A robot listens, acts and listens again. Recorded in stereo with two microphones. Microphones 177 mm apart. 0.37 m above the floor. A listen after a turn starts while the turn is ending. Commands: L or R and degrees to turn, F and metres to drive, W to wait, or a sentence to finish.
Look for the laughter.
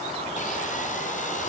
W
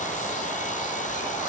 W
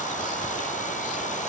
I can't make out laughter.